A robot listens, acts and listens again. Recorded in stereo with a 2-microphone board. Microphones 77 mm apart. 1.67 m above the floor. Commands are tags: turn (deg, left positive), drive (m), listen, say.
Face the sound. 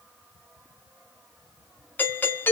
<turn deg="25"/>
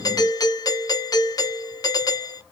<turn deg="130"/>
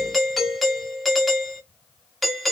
<say>Facing the doorbell.</say>